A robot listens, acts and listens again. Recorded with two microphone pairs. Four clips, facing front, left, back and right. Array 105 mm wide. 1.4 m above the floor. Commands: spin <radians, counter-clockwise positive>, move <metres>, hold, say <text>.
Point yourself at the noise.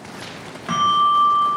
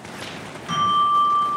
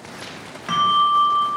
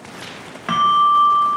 spin -1.40
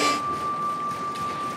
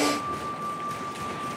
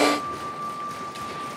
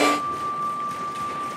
spin -0.26
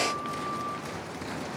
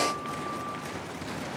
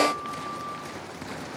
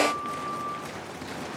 hold
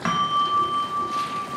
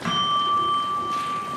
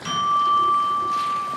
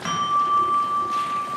say Found it: a bell, straight ahead, 1 to 2 m away.